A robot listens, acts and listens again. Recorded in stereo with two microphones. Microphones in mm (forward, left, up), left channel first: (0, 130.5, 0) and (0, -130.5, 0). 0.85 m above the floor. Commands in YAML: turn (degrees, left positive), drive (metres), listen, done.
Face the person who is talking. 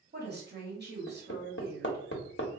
turn: -40
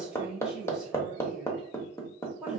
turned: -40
done: "Found it: a woman speaking, straight ahead, 1 to 2 m away."